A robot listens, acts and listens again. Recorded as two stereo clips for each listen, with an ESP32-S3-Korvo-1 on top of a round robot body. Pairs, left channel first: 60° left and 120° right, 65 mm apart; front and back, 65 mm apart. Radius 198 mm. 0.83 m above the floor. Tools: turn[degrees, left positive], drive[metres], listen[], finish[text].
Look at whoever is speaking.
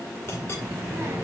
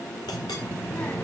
Thought: The child speaking: 70° right.
Action: turn[-70]
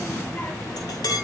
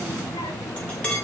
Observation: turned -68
Action: finish[Found it: a child speaking, straight ahead.]